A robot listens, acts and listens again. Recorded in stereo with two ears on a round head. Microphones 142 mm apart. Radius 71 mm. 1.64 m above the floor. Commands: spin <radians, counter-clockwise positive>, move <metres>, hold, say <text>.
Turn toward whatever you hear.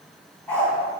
spin 0.52
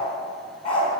spin 2.44
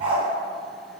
spin -0.70
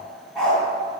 say Found it: a dog barking, straight ahead.